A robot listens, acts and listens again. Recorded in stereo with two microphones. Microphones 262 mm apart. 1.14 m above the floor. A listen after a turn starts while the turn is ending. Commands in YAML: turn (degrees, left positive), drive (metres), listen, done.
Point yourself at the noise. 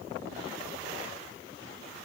listen: true
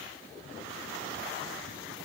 listen: true
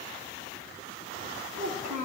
turn: -90
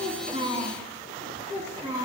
turn: -15
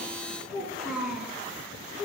done: "Found it: a child speaking, straight ahead, over 4 m away."